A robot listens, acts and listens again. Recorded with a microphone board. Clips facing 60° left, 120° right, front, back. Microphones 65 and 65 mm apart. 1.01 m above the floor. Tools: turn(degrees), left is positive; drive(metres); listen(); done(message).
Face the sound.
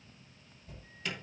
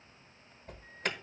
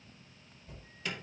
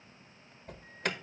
turn(degrees=-155)
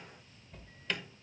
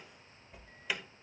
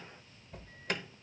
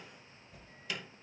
turn(degrees=-40)
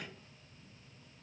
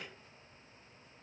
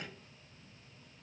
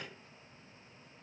listen()
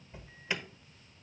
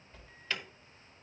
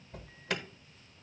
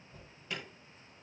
turn(degrees=-10)
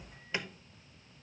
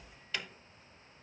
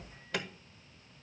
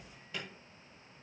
done("Found it: an alarm, straight ahead, under 1 m away.")